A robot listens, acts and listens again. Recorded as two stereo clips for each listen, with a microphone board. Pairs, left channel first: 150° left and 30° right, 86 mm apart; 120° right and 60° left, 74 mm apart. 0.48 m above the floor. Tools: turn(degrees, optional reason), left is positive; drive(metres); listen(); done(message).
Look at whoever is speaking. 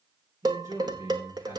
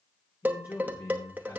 turn(degrees=-85, reason="The man speaking: 85° right.")
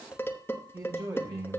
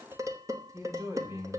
turn(degrees=15, reason="The man speaking is now 15° left.")
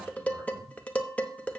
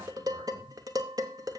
listen()
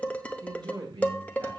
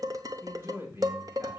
done("Facing the man speaking.")